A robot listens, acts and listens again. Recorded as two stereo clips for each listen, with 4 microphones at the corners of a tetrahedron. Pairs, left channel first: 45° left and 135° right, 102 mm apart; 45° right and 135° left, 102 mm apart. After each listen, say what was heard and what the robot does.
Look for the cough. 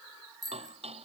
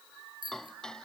Keep listening.
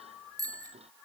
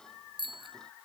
Keep listening.
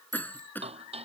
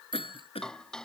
The cough: 25° right. Turn 25° right.
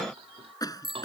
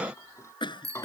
Facing the cough.